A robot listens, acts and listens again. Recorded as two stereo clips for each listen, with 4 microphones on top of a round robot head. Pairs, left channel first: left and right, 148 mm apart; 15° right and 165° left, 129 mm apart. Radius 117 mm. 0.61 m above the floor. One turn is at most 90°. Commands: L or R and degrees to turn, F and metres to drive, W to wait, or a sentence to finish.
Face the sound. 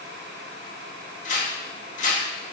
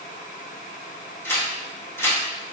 L60
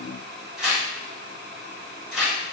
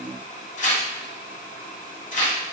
Facing the tearing paper, 1 to 2 m away.